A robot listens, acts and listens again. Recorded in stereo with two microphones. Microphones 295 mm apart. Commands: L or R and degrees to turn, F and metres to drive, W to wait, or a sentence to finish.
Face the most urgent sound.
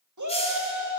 R90
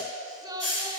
R15
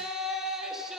Facing the shout, 1 to 2 m away.